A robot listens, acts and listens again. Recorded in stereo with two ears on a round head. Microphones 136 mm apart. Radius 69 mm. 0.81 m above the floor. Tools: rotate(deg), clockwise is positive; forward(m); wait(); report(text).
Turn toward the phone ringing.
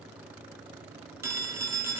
rotate(20)
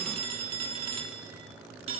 rotate(140)
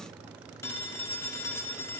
rotate(-15)
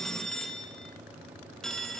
report("Facing the phone ringing, 1 to 2 m away.")